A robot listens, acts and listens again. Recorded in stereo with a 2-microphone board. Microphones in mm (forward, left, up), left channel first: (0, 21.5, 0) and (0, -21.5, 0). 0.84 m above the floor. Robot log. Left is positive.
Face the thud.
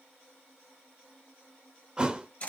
note: The thud: about 20° right or 160° right.
cmd yaw -20
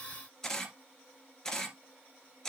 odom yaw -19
cmd idle
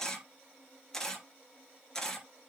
end: I heard a thud, but can't make it out now. It was about 5° right or 140° right.